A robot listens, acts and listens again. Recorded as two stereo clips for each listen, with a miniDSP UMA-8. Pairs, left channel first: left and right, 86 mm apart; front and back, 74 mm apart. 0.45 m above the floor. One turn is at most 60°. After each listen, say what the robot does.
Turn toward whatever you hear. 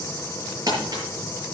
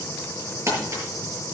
Turn 60° right.
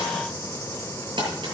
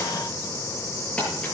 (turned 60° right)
Turn 60° right.
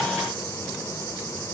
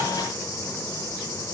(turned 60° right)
Turn 15° right.
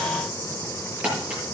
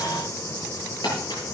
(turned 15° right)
Turn 15° right.
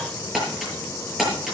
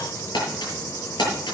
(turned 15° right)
Found it: crumpling, straight ahead, over 4 m away.